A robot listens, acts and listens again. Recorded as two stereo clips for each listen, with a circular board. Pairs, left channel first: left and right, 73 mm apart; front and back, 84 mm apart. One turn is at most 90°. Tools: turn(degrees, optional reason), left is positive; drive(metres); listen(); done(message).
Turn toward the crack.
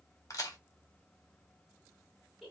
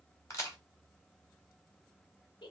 turn(degrees=55, reason="The crack: 55° left.")
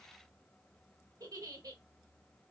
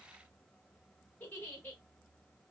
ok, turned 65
turn(degrees=-10, reason="Nothing new. It was at 10° right.")
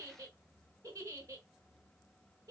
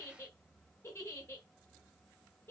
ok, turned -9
done("Facing where the crack came from. I can't hear it now.")